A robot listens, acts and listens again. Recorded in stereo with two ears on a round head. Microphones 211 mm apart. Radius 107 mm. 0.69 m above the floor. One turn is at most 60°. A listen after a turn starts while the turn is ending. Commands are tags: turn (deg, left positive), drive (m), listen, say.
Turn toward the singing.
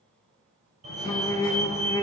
<turn deg="30"/>
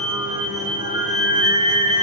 <turn deg="-15"/>
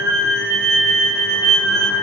<say>Found it: singing, straight ahead.</say>